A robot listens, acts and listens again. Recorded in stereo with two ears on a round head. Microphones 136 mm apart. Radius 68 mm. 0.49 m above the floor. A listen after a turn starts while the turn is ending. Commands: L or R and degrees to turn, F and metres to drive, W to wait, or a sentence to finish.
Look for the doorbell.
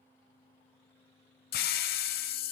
W
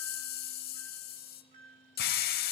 R55
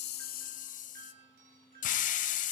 R65
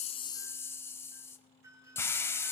R25
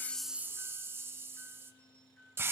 L10
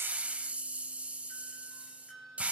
Found it: a doorbell, straight ahead.